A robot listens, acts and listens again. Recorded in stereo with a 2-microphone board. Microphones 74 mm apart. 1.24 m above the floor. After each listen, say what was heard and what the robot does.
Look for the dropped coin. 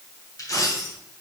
The dropped coin: about 55° left or 125° left. Turn 55° left.
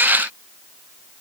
Keep listening.
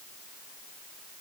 I heard a dropped coin, but can't make it out now. It was about straight ahead or 70° left.